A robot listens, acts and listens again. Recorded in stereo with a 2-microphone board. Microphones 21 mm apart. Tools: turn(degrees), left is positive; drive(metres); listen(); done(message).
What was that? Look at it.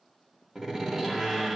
turn(degrees=-20)
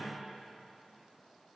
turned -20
listen()
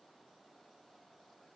done("I heard a door slam, but can't make it out now. It was about straight ahead or 140° right.")